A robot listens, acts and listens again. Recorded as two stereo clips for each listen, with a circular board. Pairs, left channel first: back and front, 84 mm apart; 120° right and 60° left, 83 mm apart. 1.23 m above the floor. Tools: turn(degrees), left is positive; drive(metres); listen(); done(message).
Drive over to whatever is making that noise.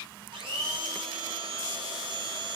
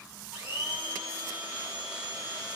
turn(degrees=-10)
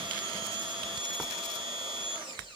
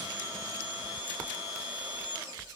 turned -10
drive(metres=1.0)
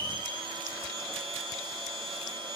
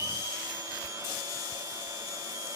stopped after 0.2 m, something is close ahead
done("Blocked. The blender is further on, straight ahead.")